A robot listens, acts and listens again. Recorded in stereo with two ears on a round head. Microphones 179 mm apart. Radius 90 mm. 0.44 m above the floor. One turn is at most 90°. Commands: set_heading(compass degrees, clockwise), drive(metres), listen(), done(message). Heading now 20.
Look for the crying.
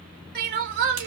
set_heading(80)
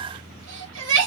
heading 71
set_heading(136)
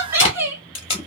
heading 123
set_heading(138)
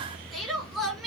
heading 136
done("Facing the crying.")